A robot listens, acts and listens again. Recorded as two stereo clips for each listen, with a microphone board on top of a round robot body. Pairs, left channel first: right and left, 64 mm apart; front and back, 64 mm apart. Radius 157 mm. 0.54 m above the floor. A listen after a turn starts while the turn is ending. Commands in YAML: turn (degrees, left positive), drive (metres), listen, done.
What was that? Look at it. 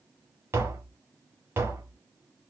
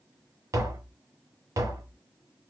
turn: 145
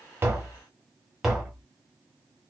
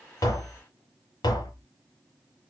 turn: 10
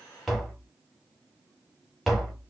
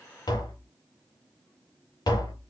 done: "Found it: tapping, straight ahead, under 1 m away."